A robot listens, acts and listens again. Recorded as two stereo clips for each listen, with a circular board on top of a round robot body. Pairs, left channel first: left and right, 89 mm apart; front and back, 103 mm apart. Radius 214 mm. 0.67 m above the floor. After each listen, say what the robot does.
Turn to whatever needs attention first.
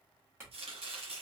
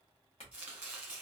Keep listening.
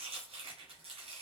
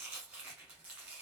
Keep listening.
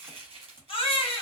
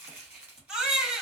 Turn 95° left.
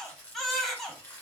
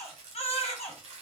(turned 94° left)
Facing the baby crying.